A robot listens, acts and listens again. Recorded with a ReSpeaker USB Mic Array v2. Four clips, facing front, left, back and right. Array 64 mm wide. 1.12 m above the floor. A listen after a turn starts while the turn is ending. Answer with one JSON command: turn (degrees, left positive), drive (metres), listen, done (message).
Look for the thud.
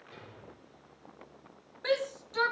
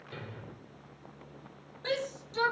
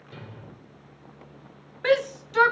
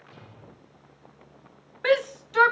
{"turn": 95}
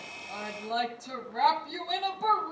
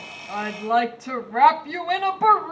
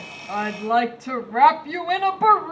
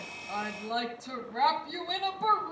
{"done": "Facing where the thud came from. I can't hear it now."}